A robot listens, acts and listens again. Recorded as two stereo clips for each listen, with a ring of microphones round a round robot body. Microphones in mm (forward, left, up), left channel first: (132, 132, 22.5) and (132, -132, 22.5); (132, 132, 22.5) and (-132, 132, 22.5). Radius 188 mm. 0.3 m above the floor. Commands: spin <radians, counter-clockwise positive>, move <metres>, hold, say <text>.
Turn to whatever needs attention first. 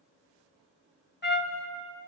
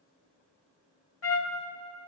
hold
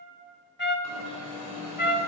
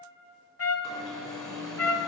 spin 1.57
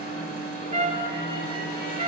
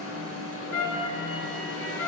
spin 0.52
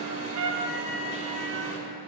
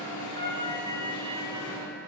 spin -0.44
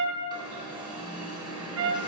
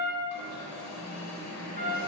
spin -0.35
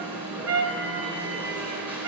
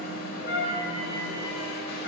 say Facing the alarm.